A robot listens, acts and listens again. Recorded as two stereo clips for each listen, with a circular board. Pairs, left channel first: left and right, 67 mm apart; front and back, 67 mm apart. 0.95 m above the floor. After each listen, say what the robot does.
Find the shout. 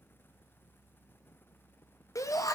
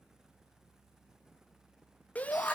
Turn 65° left.
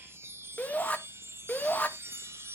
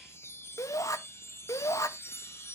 Turn 25° left.
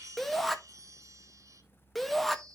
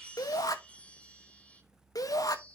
Found it: a shout, straight ahead.